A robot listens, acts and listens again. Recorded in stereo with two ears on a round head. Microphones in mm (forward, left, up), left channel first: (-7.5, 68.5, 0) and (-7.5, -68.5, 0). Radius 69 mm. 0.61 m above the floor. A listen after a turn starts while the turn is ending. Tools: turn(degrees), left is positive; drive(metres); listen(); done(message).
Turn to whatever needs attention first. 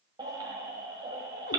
turn(degrees=-30)
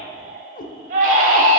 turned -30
turn(degrees=-120)
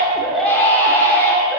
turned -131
turn(degrees=15)
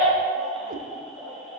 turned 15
listen()
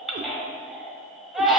done("Facing the baby crying, 1 to 2 m away.")